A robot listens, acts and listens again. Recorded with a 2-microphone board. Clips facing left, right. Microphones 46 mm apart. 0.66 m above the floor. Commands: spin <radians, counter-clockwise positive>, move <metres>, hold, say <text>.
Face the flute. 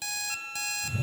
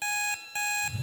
spin 0.87
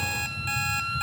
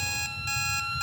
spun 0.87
spin 0.17
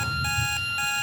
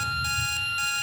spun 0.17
say Facing the flute, under 1 m away.